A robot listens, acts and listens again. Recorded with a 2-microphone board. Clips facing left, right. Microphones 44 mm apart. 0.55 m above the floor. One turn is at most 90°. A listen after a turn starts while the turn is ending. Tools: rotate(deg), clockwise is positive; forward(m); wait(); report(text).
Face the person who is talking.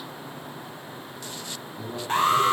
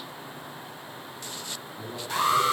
rotate(-30)
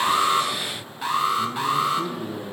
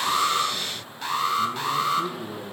rotate(40)
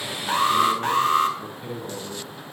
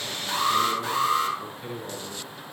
report("Found it: a man speaking, straight ahead, over 4 m away.")